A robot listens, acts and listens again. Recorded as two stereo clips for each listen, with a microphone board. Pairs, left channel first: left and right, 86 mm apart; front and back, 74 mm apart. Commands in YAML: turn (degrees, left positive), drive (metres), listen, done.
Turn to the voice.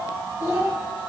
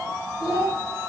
turn: -35
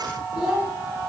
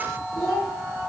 turn: -10
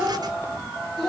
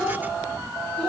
done: "Facing the child speaking, 1 to 2 m away."